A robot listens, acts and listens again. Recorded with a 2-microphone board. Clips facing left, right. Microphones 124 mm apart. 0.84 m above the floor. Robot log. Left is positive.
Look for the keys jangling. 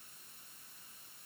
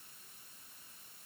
cmd idle
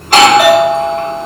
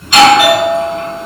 cmd idle
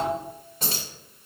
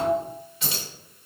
note: The keys jangling: about 45° left or 135° left.
cmd yaw +45
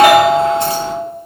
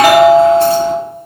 cmd idle
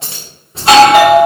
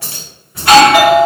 note: So it is at 25° left.
cmd yaw +25
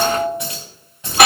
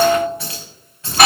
note: The keys jangling is now 20° left.
cmd yaw +20
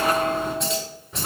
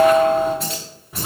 end: Found it: keys jangling, straight ahead, 2 to 4 m away.